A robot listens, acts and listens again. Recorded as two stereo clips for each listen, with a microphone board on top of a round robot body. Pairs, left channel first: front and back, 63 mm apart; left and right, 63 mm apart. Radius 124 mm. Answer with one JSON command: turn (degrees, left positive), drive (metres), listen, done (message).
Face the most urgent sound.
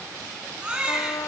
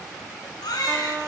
{"turn": 105}
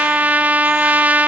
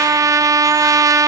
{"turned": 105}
{"listen": true}
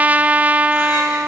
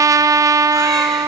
{"listen": true}
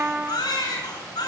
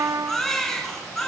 {"done": "Facing the baby crying."}